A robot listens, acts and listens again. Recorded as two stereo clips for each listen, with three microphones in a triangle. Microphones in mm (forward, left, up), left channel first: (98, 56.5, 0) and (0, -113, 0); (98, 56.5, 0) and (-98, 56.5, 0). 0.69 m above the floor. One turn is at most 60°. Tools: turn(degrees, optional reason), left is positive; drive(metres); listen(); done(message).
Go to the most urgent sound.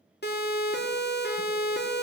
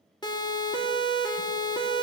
turn(degrees=60, reason="The siren: 65° left.")
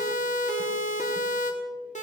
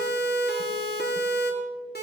turn(degrees=15, reason="The siren is now 15° left.")
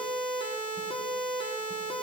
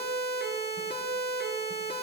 drive(metres=1.0)
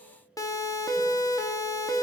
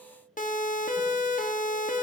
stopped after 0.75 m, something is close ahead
done("I am next to the siren.")